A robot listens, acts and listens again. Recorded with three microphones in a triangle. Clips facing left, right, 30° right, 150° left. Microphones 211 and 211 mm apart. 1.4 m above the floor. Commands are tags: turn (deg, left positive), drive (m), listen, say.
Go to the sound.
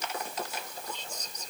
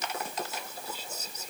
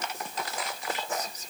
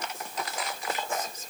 <turn deg="-170"/>
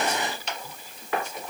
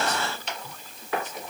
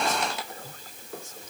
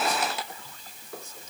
<listen/>
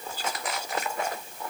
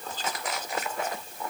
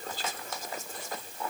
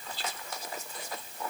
<turn deg="10"/>
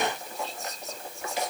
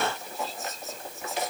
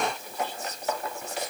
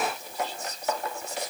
<drive m="1.0"/>
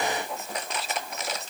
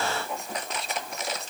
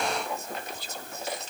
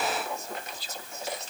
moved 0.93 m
<drive m="1.0"/>
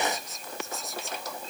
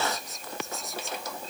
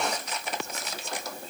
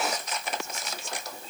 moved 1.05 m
<listen/>
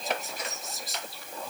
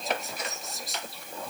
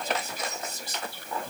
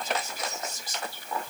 <drive m="1.0"/>
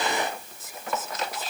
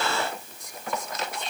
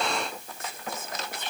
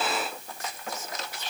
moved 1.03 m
<drive m="1.0"/>
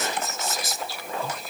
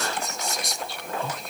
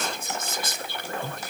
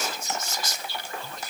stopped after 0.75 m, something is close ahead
<say>Arrived at the whispering, straight ahead.</say>